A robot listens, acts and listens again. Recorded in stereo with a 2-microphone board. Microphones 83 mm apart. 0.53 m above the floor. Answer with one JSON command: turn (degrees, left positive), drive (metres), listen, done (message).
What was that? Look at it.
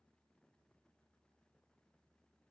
{"listen": true}
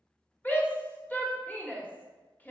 {"turn": 20}
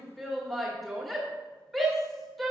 {"done": "Found it: a shout, straight ahead, 1 to 2 m away."}